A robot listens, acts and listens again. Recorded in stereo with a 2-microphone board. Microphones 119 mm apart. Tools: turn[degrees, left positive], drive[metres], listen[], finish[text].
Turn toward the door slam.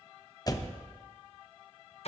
Thought: The door slam: about 30° left or 150° left.
Action: turn[30]
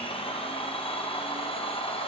Action: listen[]
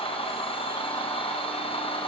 Action: finish[I heard a door slam, but can't make it out now. It was about straight ahead or 120° left.]